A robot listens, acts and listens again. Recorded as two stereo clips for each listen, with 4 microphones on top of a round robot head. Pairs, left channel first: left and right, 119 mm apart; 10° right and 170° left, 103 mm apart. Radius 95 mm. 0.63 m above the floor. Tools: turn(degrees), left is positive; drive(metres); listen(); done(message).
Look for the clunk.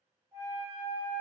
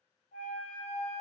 listen()
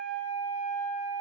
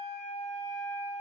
listen()
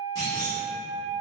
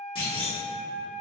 turn(degrees=25)
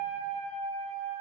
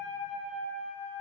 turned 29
done("Facing where the clunk came from. I can't hear it now.")